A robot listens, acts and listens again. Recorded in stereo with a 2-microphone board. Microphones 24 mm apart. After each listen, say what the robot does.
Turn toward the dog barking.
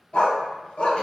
Turn 55° left.
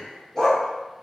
Turn 25° left.
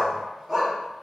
Facing the dog barking, 2 to 4 m away.